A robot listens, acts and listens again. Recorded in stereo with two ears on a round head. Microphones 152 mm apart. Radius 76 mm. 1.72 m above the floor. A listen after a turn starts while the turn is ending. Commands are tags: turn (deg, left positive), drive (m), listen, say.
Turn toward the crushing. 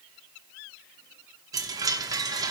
<listen/>
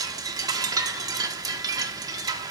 <listen/>
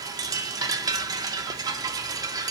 <say>I can't make out crushing, only a chime.</say>